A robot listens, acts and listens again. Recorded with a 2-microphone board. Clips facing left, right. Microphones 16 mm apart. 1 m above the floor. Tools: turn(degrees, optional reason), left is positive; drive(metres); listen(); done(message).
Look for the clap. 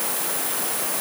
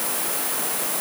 listen()
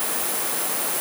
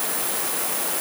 listen()
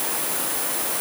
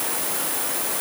done("I can't make out a clap.")